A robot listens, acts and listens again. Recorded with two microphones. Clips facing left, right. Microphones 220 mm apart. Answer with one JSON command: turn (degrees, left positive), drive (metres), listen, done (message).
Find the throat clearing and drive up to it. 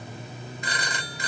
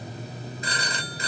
{"listen": true}
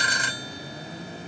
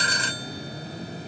{"listen": true}
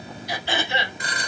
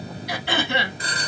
{"turn": -60}
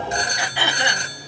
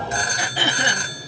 {"turn": -40}
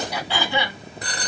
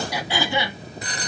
{"turn": -15}
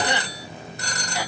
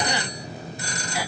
{"listen": true}
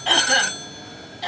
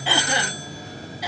{"drive": 1.0}
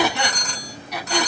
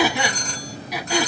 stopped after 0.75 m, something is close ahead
{"turn": -10}
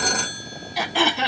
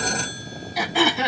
{"done": "Arrived at the throat clearing, straight ahead."}